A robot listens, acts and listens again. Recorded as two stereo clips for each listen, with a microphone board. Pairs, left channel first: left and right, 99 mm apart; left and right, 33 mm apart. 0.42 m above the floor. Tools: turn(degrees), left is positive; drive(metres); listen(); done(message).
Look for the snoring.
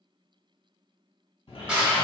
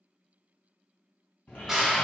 turn(degrees=65)
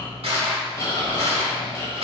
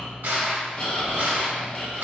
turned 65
turn(degrees=35)
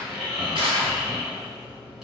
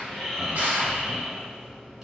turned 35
turn(degrees=-10)
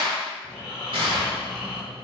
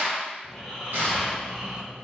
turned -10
done("Facing the snoring.")